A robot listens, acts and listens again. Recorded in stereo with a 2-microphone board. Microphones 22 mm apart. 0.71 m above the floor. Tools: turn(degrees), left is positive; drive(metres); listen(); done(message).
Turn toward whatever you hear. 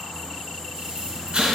turn(degrees=-55)
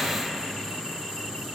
listen()
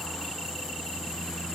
done("I heard an explosion, but can't make it out now. It was about straight ahead or 70° right.")